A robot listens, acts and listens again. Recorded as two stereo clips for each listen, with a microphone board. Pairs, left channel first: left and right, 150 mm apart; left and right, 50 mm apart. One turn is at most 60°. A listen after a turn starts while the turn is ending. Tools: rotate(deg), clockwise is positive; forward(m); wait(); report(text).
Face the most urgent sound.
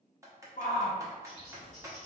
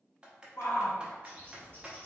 rotate(-60)
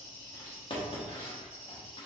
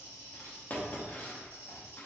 wait()
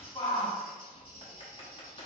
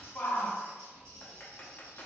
rotate(-35)
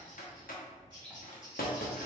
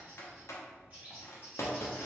wait()
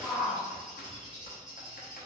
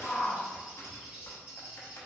rotate(10)
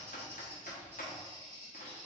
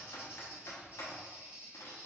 report("Found it: a shout, straight ahead.")